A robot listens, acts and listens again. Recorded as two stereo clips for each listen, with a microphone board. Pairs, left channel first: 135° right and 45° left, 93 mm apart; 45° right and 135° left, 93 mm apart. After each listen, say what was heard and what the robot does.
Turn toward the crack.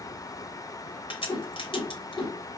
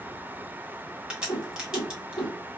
The crack: 145° right. Turn 145° right.
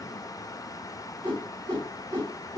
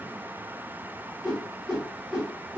Facing where the crack came from. I can't hear it now.